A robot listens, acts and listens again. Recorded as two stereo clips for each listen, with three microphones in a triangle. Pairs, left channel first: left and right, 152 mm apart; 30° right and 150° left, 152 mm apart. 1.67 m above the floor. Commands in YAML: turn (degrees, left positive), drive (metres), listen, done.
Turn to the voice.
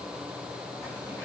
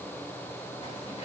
listen: true
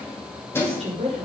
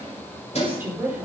turn: -135
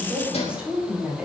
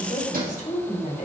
done: "Facing the woman speaking, over 4 m away."